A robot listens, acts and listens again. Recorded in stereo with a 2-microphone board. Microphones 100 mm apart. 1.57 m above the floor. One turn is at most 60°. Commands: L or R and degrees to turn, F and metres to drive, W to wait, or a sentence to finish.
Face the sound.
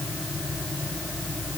W
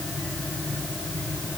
W
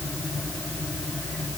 I can't make out anything.